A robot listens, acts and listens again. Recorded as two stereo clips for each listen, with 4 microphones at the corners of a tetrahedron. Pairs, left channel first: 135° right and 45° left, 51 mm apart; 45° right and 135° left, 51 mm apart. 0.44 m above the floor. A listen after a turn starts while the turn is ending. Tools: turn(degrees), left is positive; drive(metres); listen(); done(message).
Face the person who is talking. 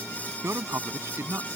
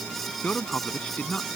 turn(degrees=15)
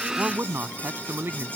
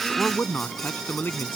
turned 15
done("Found it: a man speaking, straight ahead.")